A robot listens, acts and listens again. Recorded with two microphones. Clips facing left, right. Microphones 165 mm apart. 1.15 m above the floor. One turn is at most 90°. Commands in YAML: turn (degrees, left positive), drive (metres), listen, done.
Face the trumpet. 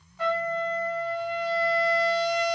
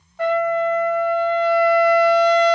turn: -65
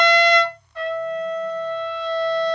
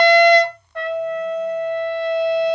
turn: -55
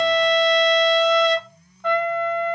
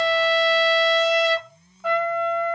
done: "Found it: a trumpet, straight ahead, under 1 m away."